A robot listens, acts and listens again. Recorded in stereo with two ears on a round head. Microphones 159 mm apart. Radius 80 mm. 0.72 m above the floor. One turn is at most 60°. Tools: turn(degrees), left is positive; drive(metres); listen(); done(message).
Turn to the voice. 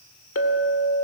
listen()
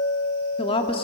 turn(degrees=30)
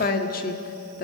turn(degrees=60)
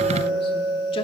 turn(degrees=50)
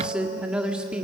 done("Found it: a woman speaking, straight ahead, 1 to 2 m away.")